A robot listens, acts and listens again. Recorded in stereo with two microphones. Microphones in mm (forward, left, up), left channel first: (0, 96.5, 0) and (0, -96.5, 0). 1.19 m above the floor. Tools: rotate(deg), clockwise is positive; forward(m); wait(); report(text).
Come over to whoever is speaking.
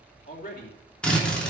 rotate(-45)
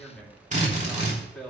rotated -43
forward(1.0)
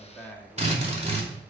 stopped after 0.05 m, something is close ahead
rotate(-10)
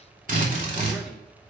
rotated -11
wait()
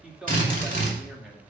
report("Something is in my way. I am facing the man speaking but have not reached it.")